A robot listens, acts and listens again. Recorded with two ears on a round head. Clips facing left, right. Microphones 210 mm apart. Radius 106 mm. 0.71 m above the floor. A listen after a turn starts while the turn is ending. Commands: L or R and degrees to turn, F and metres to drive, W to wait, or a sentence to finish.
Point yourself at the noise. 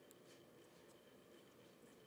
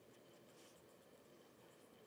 W
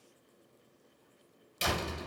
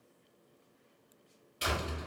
L60
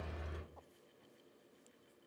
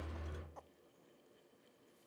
L65
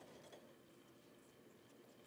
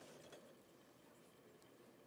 Facing where the door slam came from. I can't hear it now.